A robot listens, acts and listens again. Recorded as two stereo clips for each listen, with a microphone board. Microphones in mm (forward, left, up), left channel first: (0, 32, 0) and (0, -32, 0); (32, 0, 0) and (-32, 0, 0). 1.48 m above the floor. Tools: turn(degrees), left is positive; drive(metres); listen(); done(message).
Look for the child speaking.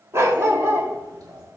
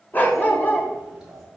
turn(degrees=-100)
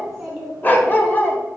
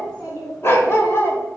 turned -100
done("Facing the child speaking, 2 to 4 m away.")